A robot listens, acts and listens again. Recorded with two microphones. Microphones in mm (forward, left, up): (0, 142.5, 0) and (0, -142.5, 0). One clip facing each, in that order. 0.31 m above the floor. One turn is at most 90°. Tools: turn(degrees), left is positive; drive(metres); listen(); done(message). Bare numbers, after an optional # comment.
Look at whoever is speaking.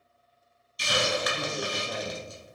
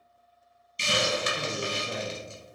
# The man speaking: about 60° left or 120° left.
turn(60)
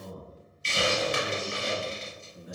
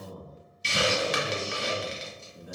# So it is at 30° left.
turn(30)
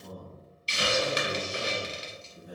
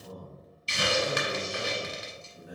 done("Facing the man speaking, 1 to 2 m away.")